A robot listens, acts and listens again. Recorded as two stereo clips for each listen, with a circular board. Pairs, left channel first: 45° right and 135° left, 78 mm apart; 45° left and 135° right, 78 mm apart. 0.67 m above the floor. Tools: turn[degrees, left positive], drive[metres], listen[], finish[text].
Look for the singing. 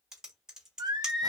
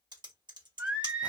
Thought: The singing: 150° left.
Action: turn[150]
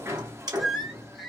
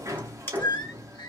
Thought: The singing is now 45° left.
Action: turn[45]
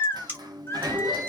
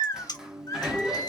Action: finish[Facing the singing.]